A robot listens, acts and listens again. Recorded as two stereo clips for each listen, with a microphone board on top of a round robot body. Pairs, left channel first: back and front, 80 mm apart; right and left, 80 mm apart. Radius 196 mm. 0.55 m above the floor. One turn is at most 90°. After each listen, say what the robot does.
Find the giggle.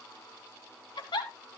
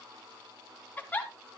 Turn 90° right.
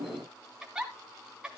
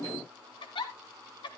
Turn 80° right.
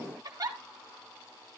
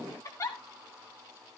Turn 40° right.
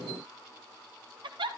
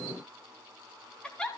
Turn 10° right.
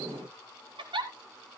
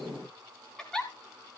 Found it: a giggle, straight ahead.